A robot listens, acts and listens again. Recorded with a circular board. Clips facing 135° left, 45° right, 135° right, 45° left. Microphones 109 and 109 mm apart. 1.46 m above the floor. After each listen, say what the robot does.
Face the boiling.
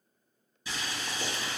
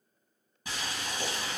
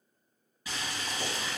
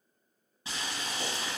Turn 15° right.
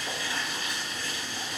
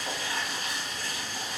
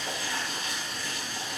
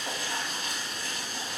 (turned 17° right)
Found it: boiling, straight ahead.